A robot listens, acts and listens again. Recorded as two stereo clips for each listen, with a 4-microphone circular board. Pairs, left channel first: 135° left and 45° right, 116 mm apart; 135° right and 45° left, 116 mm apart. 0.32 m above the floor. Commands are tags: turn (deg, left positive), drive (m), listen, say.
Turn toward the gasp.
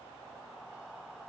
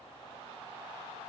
<listen/>
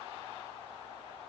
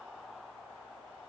<listen/>
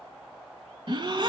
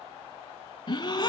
<turn deg="-90"/>
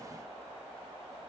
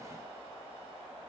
<say>Facing where the gasp came from. I can't hear it now.</say>